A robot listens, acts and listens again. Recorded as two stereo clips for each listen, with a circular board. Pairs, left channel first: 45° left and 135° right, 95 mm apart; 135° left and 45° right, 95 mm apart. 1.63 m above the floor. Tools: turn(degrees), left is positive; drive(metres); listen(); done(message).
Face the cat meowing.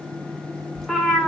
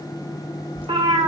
turn(degrees=-45)
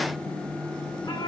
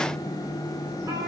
done("Facing the cat meowing, 2 to 4 m away.")